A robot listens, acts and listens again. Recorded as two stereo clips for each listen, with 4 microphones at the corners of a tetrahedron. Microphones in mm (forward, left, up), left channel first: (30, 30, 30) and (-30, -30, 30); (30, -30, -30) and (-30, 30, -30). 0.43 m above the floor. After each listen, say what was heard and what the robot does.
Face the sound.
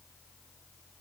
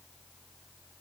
Keep listening.
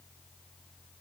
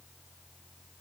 Keep listening.
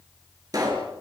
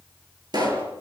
The pop: 175° left. Turn 175° left.
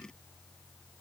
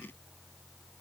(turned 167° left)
Nothing new. It was at 10° left. Turn 10° left.
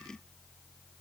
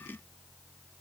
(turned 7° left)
I heard a pop from this way, but can't make it out now.